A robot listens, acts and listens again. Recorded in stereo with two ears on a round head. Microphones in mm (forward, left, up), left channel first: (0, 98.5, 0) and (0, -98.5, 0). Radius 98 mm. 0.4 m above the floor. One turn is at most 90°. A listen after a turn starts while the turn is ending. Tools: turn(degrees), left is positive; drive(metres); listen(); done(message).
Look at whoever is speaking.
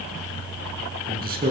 turn(degrees=-45)
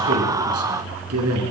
turn(degrees=-90)
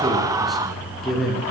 done("Found it: a man speaking, straight ahead, over 4 m away.")